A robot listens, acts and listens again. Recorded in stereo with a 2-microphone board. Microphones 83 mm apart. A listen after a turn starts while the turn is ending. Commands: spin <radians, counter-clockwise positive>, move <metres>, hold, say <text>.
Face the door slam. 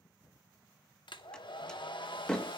spin 0.52
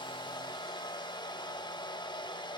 hold
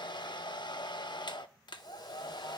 say I heard a door slam, but can't make it out now. It was about 20° right or 140° left.